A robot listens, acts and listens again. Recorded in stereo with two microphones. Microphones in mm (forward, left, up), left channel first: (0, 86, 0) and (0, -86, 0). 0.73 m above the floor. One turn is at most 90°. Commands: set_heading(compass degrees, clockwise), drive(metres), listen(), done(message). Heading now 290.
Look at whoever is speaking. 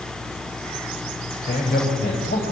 set_heading(215)
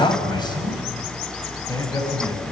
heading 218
set_heading(198)
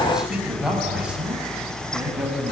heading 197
done("Found it: a man speaking, straight ahead.")